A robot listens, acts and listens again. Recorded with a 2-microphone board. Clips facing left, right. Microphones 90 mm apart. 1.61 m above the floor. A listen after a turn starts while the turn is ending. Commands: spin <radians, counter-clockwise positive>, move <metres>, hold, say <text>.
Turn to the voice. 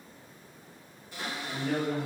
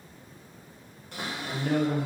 spin -1.13
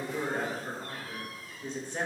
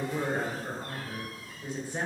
spin -0.17
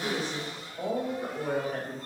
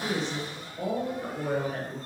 say Facing the woman speaking.